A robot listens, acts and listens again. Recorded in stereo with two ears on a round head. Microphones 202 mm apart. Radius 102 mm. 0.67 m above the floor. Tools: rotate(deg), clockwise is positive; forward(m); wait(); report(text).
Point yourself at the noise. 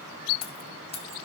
rotate(-25)
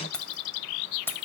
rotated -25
rotate(-10)
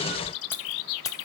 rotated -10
rotate(-15)
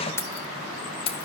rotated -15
rotate(-25)
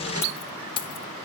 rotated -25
rotate(-25)
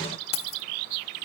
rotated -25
rotate(-25)
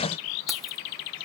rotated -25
wait()
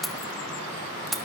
report("Facing the keys jangling.")